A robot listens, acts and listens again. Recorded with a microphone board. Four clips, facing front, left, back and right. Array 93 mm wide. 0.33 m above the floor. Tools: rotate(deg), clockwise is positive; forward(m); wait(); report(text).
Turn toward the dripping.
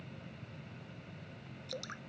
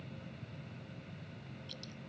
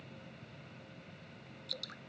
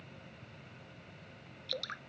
rotate(70)
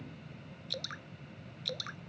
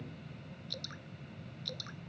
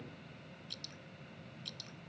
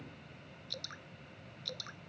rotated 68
report("Found it: dripping, straight ahead.")